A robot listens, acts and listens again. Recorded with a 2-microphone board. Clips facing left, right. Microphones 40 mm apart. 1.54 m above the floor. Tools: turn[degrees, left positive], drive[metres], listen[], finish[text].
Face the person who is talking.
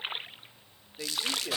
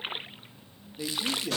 Thought: The man speaking: about 20° left or 160° left.
Action: turn[20]
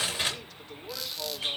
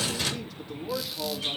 Action: finish[Found it: a man speaking, straight ahead.]